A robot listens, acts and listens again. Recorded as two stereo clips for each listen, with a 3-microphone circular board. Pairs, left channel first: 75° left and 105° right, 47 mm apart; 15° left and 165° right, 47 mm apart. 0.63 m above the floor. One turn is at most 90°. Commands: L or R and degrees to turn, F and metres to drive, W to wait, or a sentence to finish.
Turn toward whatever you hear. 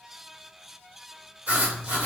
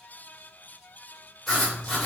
R65
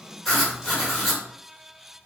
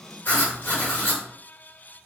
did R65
R15
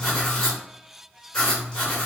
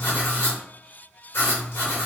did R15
Found it: writing, straight ahead, 1 to 2 m away.